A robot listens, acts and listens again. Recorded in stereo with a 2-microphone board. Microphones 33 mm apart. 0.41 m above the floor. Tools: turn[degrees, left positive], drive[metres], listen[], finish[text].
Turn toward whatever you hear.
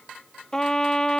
Thought: The trumpet: about 20° left or 160° left.
Action: turn[20]
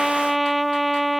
Action: finish[Found it: a trumpet, straight ahead.]